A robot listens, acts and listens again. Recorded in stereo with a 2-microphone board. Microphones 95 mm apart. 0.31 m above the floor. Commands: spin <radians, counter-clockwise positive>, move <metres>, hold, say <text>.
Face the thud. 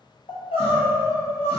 hold
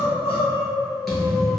spin 0.52
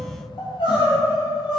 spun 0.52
hold
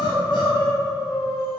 say I heard a thud, but can't make it out now. It was about 30° right or 150° left.